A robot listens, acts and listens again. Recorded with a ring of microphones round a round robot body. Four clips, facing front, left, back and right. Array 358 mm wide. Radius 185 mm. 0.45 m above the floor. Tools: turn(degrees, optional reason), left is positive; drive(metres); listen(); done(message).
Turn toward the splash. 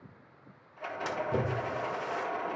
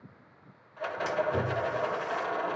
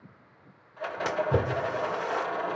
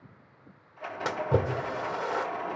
turn(degrees=-125, reason="The splash: 125° right.")
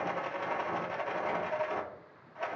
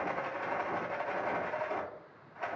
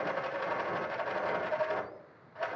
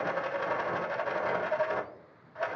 done("I heard a splash from this way, but can't make it out now.")